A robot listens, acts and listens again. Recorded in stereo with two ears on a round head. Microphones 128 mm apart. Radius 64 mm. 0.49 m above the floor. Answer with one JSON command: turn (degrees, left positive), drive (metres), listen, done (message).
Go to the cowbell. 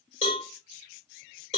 {"turn": 45}
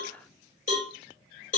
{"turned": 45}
{"turn": 80}
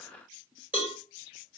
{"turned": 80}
{"turn": -15}
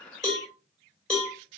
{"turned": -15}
{"drive": 1.0}
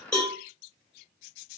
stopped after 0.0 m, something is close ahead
{"turn": 10}
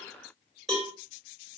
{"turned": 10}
{"done": "Something is in my way. I am facing the cowbell but have not reached it."}